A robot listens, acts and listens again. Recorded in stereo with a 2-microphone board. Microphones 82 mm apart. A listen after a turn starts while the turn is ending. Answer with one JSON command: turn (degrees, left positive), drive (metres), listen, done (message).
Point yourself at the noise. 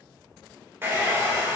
{"turn": -25}
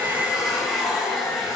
{"done": "Found it: a hair dryer, straight ahead, 2 to 4 m away."}